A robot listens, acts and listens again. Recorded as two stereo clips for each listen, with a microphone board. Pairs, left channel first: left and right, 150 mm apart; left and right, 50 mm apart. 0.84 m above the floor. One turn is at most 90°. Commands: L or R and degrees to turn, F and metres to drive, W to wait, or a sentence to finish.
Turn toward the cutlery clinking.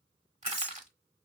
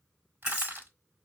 R30
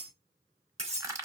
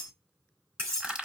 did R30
R90
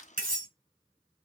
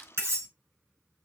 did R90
R65
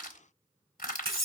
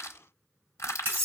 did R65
R40
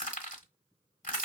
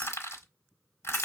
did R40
Facing the cutlery clinking.